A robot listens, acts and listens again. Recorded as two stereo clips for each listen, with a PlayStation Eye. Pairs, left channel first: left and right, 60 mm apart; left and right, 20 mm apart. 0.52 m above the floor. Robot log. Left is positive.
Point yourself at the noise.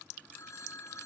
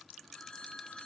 note: The phone ringing: about 60° left or 120° left.
cmd yaw +60
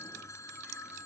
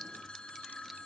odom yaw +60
note: So it is at 60° left.
cmd yaw +60
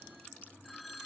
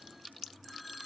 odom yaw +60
end: Found it: a phone ringing, straight ahead.